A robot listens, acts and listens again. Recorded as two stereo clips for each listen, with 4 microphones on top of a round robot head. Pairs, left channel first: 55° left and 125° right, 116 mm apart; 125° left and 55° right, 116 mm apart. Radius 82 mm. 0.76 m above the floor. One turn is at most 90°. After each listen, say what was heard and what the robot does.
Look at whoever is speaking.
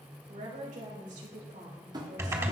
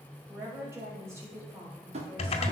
The woman speaking: 125° right. Turn 90° right.
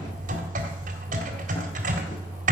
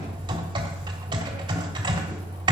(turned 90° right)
Nothing new. It was at 35° right. Turn 35° right.
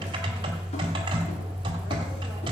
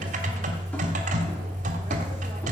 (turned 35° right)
Keep listening.
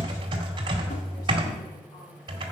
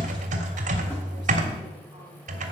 I heard a woman speaking from this way, but can't make it out now.